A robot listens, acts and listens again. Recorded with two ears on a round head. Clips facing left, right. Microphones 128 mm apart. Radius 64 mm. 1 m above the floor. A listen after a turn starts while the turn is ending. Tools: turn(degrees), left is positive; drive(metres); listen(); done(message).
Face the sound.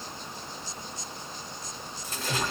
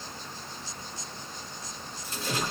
turn(degrees=45)
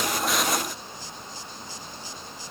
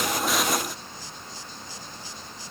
listen()
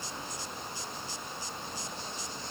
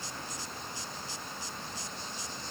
done("I heard a splash, but can't make it out now. It was about straight ahead or 90° left.")